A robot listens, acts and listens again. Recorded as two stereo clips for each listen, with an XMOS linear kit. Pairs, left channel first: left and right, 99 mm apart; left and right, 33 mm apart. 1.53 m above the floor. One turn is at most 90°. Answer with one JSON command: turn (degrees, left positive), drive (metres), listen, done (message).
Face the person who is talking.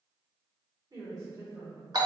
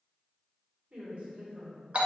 {"turn": -35}
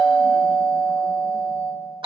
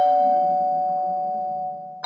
{"listen": true}
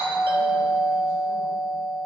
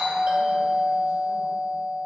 {"listen": true}
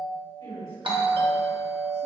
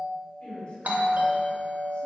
{"turn": 50}
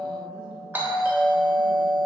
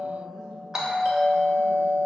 {"listen": true}
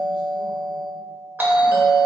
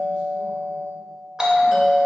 {"listen": true}
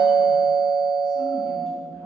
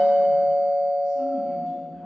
{"done": "I heard a woman speaking from this way, but can't make it out now."}